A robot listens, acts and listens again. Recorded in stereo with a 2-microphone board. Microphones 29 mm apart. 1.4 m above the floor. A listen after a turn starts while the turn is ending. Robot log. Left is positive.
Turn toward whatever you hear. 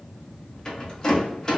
note: The rattle: about 20° left or 160° left.
cmd yaw +20
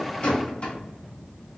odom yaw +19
note: So it is at 140° left.
cmd yaw +140
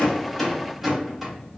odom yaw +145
end: Facing the rattle, 1 to 2 m away.